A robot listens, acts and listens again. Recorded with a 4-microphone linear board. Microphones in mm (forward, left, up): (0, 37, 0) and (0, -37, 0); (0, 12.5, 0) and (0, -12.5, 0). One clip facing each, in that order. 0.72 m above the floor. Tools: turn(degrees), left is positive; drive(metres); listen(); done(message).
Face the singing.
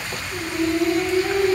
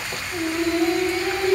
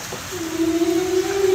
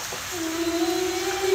turn(degrees=-90)
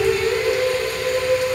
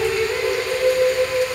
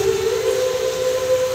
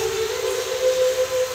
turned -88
turn(degrees=-10)
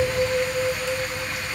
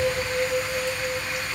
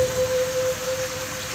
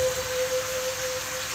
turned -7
turn(degrees=-10)
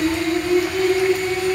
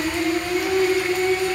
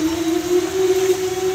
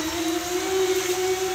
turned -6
turn(degrees=-15)
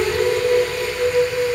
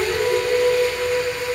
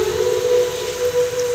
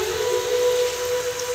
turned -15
done("Found it: singing, straight ahead, over 4 m away.")